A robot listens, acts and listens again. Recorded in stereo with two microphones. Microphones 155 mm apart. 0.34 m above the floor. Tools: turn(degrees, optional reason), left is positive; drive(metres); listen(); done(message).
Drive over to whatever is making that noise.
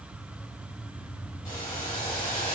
turn(degrees=30, reason="The boiling: about 30° left or 150° left.")
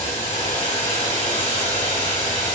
turn(degrees=120, reason="So it is at 120° left.")
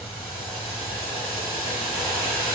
drive(metres=1.0)
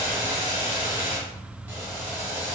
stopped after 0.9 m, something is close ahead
turn(degrees=-10, reason="The boiling is now 10° right.")
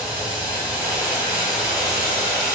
done("I am next to the boiling.")